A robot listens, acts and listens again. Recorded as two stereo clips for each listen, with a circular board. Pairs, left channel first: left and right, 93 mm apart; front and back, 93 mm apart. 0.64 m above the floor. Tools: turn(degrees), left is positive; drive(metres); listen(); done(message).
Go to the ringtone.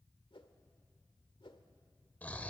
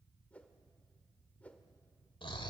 listen()
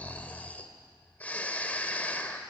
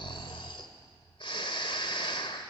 listen()
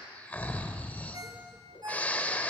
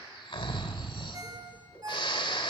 turn(degrees=-135)
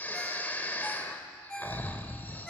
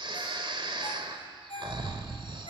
drive(metres=1.0)
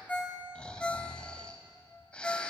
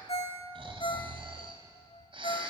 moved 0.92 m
turn(degrees=10)
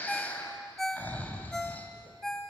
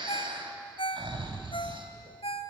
drive(metres=1.0)
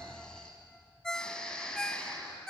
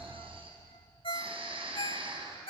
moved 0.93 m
turn(degrees=10)
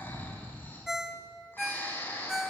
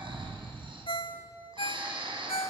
drive(metres=1.0)
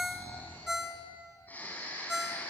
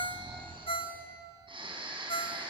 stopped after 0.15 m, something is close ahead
done("I am next to the ringtone.")